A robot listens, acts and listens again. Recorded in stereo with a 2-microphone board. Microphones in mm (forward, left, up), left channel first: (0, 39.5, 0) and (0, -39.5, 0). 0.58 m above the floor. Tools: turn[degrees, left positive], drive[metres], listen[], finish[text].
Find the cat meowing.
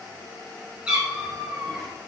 Action: turn[-30]
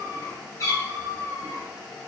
Thought: So it is at 50° left.
Action: turn[50]
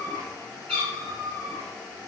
Thought: The cat meowing is now 15° left.
Action: turn[15]
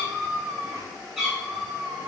Action: finish[Found it: a cat meowing, straight ahead, 2 to 4 m away.]